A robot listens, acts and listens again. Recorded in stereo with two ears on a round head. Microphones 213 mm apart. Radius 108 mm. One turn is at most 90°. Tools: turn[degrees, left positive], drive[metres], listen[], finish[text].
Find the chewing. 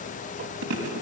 Thought: The chewing: about 65° right or 115° right.
Action: turn[-65]
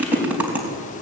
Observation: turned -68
Action: finish[Facing the chewing.]